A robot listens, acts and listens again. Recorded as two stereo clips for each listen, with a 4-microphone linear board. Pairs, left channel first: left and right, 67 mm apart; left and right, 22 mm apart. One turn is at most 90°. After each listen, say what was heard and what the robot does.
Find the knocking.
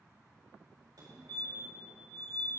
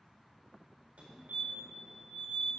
Keep listening.
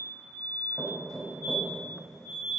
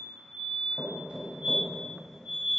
Turn 30° left.
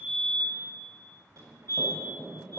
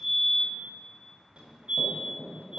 So it is at 155° left. Turn 90° left.
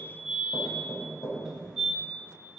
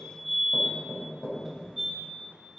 The knocking is now 100° left. Turn 90° left.
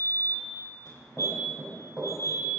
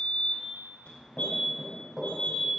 The knocking is now 15° right. Turn 15° right.
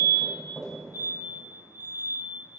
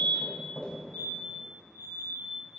Found it: knocking, straight ahead, over 4 m away.